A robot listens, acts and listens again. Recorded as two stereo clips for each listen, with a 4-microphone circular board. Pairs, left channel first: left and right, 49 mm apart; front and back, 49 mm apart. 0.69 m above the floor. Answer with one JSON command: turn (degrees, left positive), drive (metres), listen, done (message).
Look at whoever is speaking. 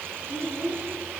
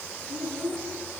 {"turn": 115}
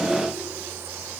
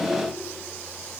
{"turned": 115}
{"listen": true}
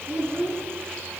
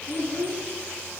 {"turn": -30}
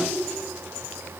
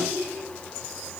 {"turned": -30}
{"done": "Facing the child speaking."}